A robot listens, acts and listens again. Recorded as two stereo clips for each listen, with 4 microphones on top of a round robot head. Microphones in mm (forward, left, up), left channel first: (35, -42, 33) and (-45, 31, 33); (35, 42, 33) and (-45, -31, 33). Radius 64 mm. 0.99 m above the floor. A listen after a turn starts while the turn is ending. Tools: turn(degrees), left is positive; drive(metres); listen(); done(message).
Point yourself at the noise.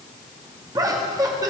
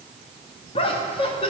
turn(degrees=80)
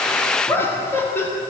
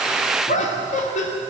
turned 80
turn(degrees=30)
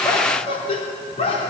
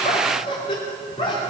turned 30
done("Facing the laughter.")